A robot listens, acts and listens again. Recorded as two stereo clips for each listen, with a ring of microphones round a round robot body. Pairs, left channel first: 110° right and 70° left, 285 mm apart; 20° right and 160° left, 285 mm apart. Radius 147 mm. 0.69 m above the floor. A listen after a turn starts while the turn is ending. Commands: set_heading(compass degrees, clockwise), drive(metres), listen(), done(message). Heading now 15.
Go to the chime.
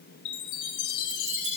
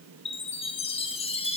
set_heading(105)
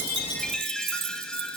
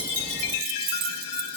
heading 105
set_heading(130)
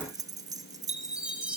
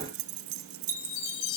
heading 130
set_heading(150)
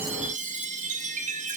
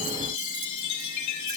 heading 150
drive(1.0)
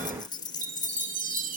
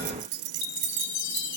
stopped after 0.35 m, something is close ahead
done("Something is in my way. I am facing the chime but have not reached it.")